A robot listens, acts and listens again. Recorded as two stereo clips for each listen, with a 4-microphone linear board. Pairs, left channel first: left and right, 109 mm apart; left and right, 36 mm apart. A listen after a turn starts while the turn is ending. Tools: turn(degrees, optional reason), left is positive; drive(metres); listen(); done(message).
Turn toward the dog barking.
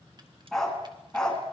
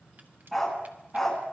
turn(degrees=30)
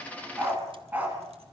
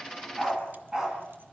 turn(degrees=-15, reason="So it is at 15° right.")
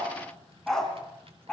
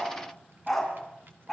turn(degrees=10, reason="The dog barking is now 10° left.")
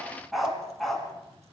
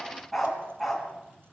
done("Found it: a dog barking, straight ahead.")